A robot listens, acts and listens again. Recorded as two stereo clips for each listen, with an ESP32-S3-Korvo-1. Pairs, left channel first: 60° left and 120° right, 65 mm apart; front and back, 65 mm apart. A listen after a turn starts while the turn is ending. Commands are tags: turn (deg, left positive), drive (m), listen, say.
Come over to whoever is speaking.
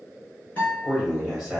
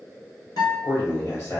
<turn deg="-40"/>
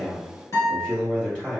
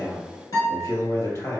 <turn deg="-15"/>
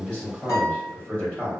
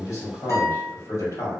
<drive m="1.0"/>
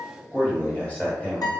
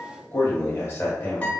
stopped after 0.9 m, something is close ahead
<say>I am next to the man speaking.</say>